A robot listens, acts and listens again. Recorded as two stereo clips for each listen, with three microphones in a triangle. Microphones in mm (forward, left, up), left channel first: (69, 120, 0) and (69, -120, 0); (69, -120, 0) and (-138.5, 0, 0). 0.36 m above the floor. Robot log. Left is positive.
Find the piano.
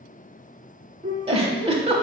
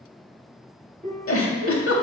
note: The piano: 155° right.
cmd yaw -155
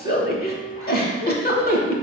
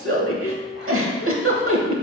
end: Found it: a piano, straight ahead, 1 to 2 m away.